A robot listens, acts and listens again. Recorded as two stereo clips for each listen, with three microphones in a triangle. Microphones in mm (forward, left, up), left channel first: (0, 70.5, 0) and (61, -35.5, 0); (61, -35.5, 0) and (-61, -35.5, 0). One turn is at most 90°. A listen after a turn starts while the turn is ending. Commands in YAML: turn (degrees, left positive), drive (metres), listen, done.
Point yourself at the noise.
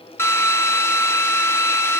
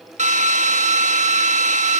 turn: -90
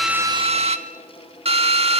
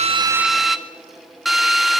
turn: -90
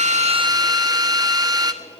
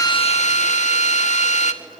done: "Facing the drill, 1 to 2 m away."